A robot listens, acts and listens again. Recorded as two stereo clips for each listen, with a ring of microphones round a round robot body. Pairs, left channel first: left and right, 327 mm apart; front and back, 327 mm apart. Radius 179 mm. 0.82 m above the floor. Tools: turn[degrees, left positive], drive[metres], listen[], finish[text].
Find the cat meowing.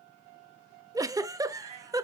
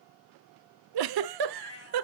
Thought: The cat meowing: 45° right.
Action: turn[-45]
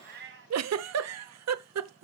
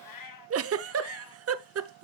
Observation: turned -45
Thought: The cat meowing is now 30° right.
Action: turn[-30]
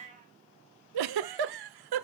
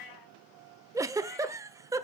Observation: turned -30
Thought: The cat meowing is now 20° right.
Action: turn[-20]
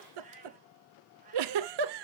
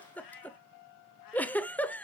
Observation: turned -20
Thought: The cat meowing is now 20° right.
Action: turn[-20]
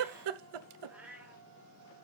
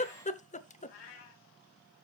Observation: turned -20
Action: finish[Found it: a cat meowing, straight ahead, 2 to 4 m away.]